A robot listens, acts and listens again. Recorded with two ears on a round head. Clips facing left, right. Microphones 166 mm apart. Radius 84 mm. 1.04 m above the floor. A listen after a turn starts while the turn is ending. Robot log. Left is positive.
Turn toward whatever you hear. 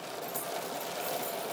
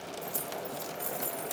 note: The keys jangling: about 55° right or 125° right.
cmd yaw -55
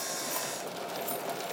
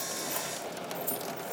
note: So it is at 15° right.
cmd yaw -15
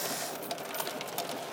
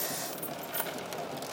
note: The keys jangling is now 25° right.
cmd yaw -25
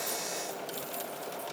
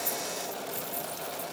note: The keys jangling is now 15° right.
cmd yaw -15
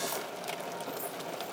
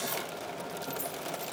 note: The keys jangling is now 15° right.
cmd yaw -15
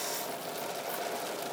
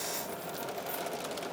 cmd idle
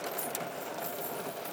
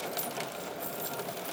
end: Found it: keys jangling, straight ahead, 2 to 4 m away.